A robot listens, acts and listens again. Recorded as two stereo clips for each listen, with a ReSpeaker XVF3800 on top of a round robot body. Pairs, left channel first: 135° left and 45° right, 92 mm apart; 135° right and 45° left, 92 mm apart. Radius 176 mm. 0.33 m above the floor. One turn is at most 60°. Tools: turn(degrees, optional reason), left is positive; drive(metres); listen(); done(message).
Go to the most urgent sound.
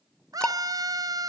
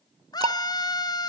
turn(degrees=-60, reason="The scream: 95° right.")
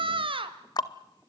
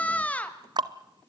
turn(degrees=-60, reason="The scream is now 60° right.")
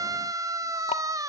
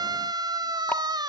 drive(metres=1.0)
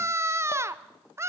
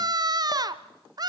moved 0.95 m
turn(degrees=10, reason="The scream is now 10° left.")
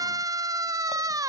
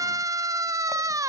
drive(metres=1.0)
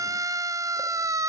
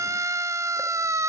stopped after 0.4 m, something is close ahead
done("I am next to the scream.")